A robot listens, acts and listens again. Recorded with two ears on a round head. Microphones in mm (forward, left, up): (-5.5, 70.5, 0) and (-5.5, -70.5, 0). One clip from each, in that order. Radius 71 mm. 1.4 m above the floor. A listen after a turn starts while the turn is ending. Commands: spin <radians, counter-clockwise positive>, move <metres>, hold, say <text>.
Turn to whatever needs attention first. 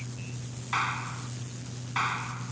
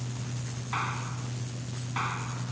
hold
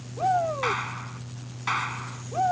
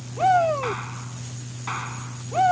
spin -1.13
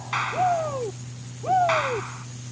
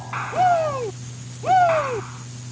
spin -0.87
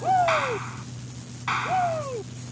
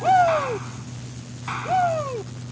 spin -0.35
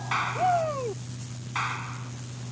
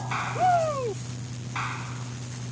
say Found it: a shout, straight ahead.